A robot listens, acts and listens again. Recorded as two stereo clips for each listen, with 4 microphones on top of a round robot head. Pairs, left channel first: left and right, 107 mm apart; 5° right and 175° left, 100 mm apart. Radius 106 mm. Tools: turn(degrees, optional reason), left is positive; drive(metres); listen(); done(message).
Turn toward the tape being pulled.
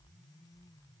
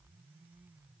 listen()
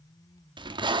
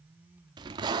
turn(degrees=-135, reason="The tape being pulled: 135° right.")
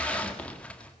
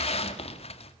turn(degrees=10, reason="The tape being pulled is now 10° left.")
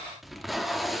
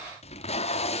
done("Facing the tape being pulled, 1 to 2 m away.")